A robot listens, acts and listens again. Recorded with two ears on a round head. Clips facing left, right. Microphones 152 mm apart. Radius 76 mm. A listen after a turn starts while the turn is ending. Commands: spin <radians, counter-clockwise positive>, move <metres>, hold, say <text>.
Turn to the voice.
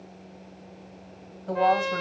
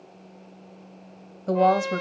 spin -0.87
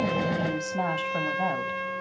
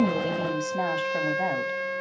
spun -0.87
spin -0.17
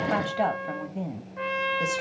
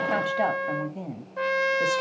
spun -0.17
say Facing the woman speaking, 1 to 2 m away.